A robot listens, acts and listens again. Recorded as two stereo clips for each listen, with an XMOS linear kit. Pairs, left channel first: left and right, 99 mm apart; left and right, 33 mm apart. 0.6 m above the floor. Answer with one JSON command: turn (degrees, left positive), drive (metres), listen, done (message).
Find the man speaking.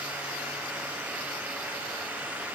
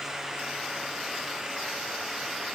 {"listen": true}
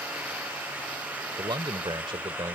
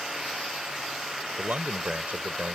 {"turn": -55}
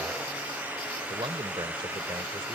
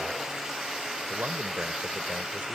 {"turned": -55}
{"listen": true}
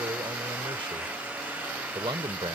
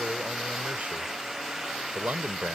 {"turn": -65}
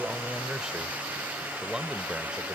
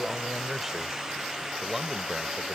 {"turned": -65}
{"turn": -10}
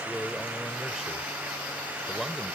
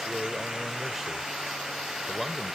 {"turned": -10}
{"done": "Facing the man speaking."}